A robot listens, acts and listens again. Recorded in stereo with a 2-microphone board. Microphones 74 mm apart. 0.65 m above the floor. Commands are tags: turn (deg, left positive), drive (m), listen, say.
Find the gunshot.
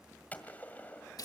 <turn deg="20"/>
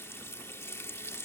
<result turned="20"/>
<listen/>
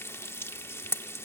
<say>I heard a gunshot, but can't make it out now. It was about straight ahead or 140° left.</say>